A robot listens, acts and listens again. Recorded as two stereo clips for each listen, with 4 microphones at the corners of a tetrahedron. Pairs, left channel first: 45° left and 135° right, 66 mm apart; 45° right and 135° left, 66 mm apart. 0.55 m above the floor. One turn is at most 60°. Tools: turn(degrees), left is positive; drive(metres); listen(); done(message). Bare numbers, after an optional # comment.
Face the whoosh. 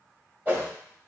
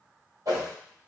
# The whoosh: 160° left.
turn(60)
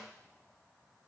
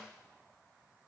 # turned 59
# Nothing new. It was at 100° left.
turn(60)
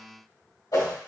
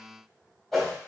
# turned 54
# The whoosh is now 45° left.
turn(45)
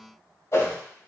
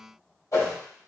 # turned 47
done("Found it: a whoosh, straight ahead, 1 to 2 m away.")